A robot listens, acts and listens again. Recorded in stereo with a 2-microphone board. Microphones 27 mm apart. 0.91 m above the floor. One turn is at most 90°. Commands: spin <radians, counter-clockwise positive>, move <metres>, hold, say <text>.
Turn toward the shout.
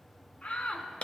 spin 0.96
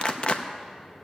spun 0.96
hold
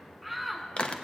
say Found it: a shout, straight ahead, 2 to 4 m away.